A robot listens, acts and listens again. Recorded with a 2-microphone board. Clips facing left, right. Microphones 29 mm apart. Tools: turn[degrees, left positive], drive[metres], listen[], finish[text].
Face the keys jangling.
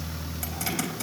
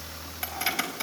Thought: The keys jangling: about 25° right or 155° right.
Action: turn[-25]
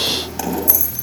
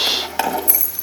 Thought: So it is at 135° right.
Action: turn[-135]
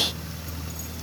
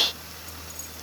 Action: listen[]
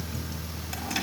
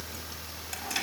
Action: listen[]
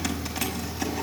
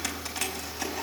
Action: finish[I heard keys jangling from this way, but can't make it out now.]